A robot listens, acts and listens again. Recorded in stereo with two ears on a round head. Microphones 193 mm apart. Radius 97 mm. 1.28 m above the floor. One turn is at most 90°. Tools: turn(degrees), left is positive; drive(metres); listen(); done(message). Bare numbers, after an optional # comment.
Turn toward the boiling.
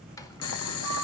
# The boiling: about 75° left or 105° left.
turn(75)
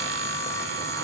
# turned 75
listen()
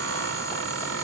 listen()
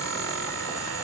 done("I heard boiling, but can't make it out now. It was about straight ahead or 30° left.")